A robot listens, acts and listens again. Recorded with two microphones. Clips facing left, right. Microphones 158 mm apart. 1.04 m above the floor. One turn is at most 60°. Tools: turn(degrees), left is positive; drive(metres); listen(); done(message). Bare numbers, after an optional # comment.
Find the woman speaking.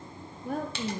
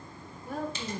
# The woman speaking: about 55° left or 125° left.
turn(55)
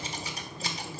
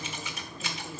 listen()
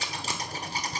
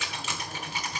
listen()
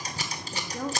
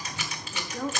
done("Facing the woman speaking, 1 to 2 m away.")